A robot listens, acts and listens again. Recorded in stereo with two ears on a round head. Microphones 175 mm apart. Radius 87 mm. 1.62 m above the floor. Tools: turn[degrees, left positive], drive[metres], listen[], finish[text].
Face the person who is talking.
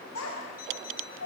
Action: turn[90]
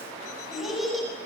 Action: finish[Found it: a child speaking, straight ahead.]